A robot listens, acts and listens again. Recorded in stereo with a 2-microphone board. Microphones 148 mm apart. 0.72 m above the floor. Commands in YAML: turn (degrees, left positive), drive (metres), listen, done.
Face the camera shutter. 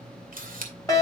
turn: -70
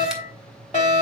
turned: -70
listen: true
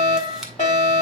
listen: true
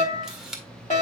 done: "Found it: a camera shutter, straight ahead, 1 to 2 m away."